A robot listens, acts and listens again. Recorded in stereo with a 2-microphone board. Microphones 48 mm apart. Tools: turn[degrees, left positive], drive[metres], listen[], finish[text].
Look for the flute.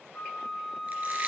Thought: The flute: about 40° left or 140° left.
Action: turn[40]
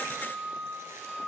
Action: finish[Found it: a flute, straight ahead, 1 to 2 m away.]